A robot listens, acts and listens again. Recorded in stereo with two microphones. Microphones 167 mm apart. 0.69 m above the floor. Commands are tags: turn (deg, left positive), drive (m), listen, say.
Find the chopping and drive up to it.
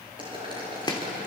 <turn deg="25"/>
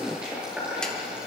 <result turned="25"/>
<listen/>
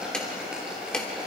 <drive m="1.0"/>
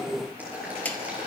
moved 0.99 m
<turn deg="15"/>
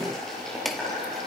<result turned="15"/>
<drive m="1.0"/>
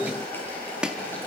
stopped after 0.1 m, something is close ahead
<turn deg="-10"/>
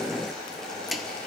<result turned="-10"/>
<say>I am next to the chopping.</say>